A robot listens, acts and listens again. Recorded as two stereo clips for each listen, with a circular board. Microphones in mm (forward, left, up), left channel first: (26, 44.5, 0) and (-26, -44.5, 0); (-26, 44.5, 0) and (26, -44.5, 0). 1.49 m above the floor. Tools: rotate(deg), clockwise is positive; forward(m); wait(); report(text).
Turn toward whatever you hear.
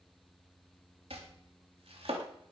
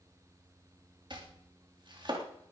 rotate(100)
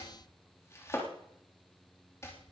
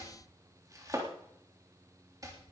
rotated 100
report("Facing the chopping.")